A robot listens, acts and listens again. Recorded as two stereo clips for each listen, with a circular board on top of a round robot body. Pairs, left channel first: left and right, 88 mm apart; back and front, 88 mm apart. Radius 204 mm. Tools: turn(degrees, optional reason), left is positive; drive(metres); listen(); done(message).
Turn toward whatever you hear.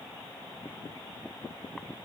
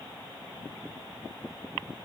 listen()
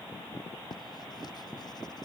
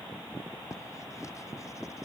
turn(degrees=130, reason="The writing: 130° left.")
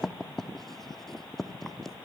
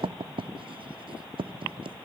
done("Facing the writing.")